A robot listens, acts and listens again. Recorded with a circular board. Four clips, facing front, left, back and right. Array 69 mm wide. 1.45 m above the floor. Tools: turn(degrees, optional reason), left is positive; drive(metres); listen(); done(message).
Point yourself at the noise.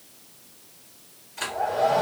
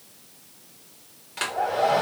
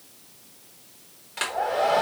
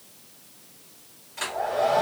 turn(degrees=140, reason="The hair dryer: 140° left.")
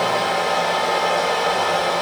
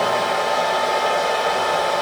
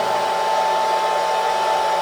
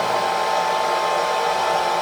turn(degrees=15, reason="The hair dryer is now 15° left.")
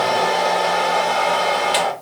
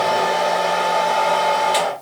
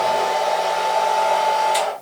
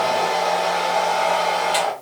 done("Facing the hair dryer, 1 to 2 m away.")